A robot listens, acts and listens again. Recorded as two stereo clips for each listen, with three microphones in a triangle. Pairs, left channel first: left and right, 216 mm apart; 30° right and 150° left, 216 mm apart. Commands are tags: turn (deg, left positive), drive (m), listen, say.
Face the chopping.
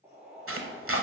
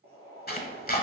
<turn deg="-80"/>
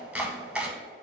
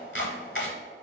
<say>Facing the chopping, under 1 m away.</say>